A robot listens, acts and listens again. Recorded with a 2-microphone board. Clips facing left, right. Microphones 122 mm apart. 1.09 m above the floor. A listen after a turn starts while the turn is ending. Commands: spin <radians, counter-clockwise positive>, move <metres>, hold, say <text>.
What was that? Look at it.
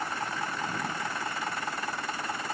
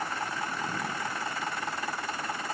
hold
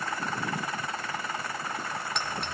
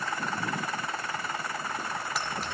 spin -0.52
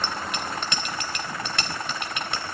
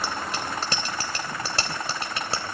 spin -2.53
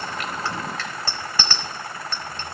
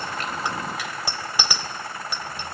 spin -0.17
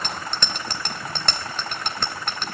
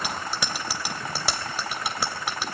say Facing the bicycle bell.